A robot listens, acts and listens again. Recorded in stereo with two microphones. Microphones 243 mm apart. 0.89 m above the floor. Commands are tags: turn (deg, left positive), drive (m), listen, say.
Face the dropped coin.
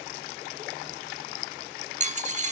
<turn deg="-30"/>
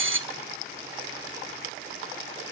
<turn deg="-115"/>
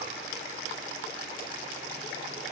<say>I heard a dropped coin from this way, but can't make it out now.</say>